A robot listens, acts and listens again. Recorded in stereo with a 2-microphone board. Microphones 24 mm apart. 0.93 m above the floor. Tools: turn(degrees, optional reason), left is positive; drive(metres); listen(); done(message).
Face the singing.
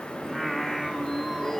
turn(degrees=30)
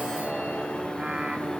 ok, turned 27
turn(degrees=-45, reason="So it is at 45° right.")
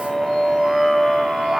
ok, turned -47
turn(degrees=-20, reason="The singing is now 20° right.")
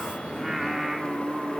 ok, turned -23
turn(degrees=-15, reason="The singing is now 15° right.")
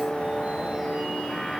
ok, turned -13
done("Found it: singing, straight ahead.")